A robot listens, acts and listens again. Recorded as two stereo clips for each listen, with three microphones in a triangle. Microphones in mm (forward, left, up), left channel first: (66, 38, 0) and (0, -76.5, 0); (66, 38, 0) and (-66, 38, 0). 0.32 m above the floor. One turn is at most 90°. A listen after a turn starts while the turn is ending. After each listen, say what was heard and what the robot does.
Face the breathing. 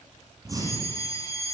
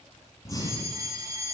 The breathing: 60° right. Turn 60° right.
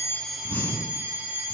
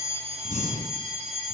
The breathing is now 15° right. Turn 15° right.
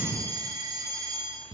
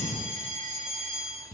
Found it: breathing, straight ahead, 2 to 4 m away.